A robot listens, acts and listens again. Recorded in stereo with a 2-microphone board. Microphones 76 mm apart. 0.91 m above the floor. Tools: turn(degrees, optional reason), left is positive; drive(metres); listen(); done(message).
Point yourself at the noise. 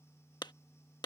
turn(degrees=65, reason="The clap: about 65° left or 115° left.")
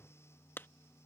turn(degrees=30, reason="So it is at 30° left.")
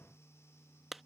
done("Facing the clap.")